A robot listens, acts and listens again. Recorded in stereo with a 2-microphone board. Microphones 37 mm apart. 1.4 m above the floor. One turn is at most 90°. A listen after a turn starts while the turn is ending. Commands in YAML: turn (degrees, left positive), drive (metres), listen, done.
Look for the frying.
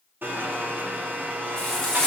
turn: 15
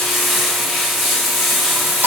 done: "Found it: frying, straight ahead, 2 to 4 m away."